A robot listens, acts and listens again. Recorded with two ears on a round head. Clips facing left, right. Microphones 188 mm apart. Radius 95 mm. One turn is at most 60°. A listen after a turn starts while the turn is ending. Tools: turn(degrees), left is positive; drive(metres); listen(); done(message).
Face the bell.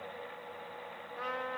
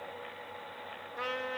listen()
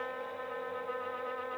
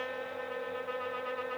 listen()
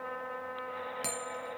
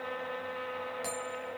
turn(degrees=35)
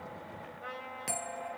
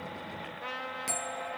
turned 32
done("Facing the bell.")